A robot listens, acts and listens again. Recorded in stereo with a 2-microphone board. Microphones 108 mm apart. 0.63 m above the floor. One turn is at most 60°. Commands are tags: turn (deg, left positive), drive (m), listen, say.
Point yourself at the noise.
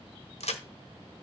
<turn deg="60"/>
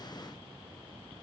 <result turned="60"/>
<turn deg="30"/>
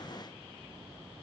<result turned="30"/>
<say>I heard a crack from this way, but can't make it out now.</say>